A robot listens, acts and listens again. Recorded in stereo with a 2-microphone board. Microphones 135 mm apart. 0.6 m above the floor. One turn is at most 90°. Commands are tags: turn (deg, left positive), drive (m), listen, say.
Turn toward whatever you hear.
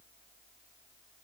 <listen/>
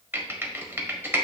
<turn deg="-30"/>
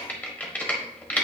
<turn deg="10"/>
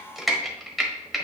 <say>Facing the typing on a keyboard.</say>